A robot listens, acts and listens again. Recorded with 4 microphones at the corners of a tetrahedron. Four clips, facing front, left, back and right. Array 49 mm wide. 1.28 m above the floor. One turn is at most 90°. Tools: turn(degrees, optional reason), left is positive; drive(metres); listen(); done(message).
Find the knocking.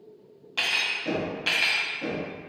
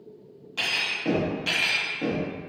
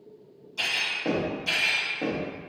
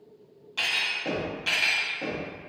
turn(degrees=-90, reason="The knocking: 165° right.")
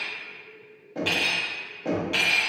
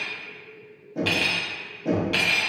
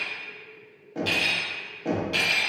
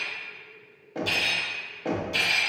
turn(degrees=-90, reason="The knocking is now 90° right.")
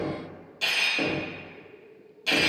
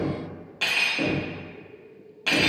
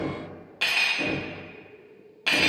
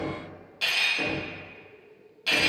turn(degrees=-15, reason="The knocking is now 15° right.")
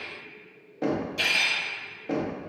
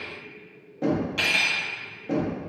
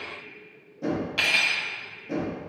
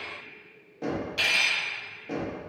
done("Facing the knocking.")